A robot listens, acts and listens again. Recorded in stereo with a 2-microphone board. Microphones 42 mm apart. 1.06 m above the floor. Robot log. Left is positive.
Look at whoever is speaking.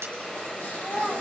note: The child speaking: about 15° left or 165° left.
cmd yaw +15
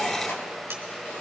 cmd idle
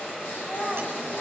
note: So it is at 150° left.
cmd yaw +150
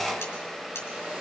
cmd idle
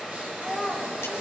note: The child speaking is now 10° right.
cmd yaw -10
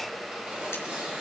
cmd idle
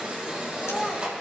end: Found it: a child speaking, straight ahead.